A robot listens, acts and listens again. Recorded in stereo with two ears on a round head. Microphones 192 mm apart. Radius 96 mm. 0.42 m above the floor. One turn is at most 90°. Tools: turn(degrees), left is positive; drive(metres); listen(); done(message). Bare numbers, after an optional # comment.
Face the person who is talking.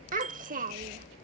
# The child speaking: about 40° right or 140° right.
turn(-40)
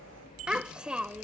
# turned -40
done("Facing the child speaking.")